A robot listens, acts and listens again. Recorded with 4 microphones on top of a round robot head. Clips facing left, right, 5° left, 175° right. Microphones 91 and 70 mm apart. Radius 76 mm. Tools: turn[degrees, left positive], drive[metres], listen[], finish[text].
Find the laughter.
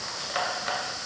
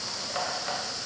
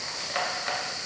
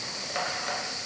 Action: listen[]
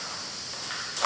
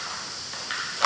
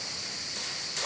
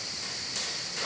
Action: listen[]
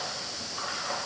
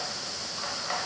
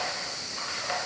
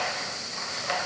Action: finish[I can't make out laughter to turn to.]